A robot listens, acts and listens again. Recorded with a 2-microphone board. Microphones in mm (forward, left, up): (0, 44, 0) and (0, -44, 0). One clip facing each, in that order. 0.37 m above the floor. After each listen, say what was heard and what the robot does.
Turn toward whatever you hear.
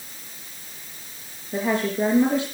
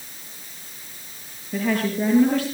The woman speaking: about 20° left or 160° left. Turn 20° left.
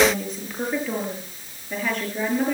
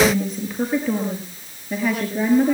Found it: a woman speaking, straight ahead.